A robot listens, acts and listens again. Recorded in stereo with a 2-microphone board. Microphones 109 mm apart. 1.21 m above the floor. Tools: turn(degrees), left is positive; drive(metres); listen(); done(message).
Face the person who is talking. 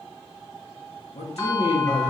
turn(degrees=75)
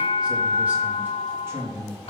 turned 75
turn(degrees=-30)
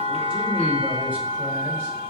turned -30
listen()
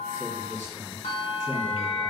turn(degrees=-25)
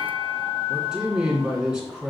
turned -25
done("Facing the man speaking.")